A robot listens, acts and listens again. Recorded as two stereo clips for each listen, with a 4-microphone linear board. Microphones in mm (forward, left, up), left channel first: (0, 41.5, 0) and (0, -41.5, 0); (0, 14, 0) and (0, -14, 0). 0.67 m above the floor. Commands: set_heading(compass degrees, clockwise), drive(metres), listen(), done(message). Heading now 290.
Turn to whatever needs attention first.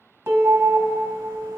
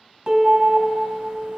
set_heading(350)
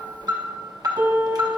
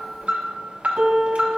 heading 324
set_heading(24)
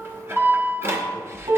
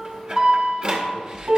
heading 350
set_heading(25)
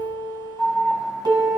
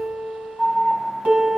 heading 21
done("Found it: an alarm, straight ahead.")